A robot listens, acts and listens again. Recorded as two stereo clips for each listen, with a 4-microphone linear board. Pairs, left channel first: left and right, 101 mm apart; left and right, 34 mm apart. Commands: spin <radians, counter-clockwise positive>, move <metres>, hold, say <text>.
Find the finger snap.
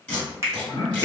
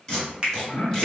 spin -0.52
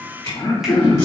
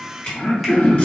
hold
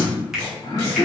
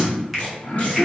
say Found it: a finger snap, straight ahead, under 1 m away.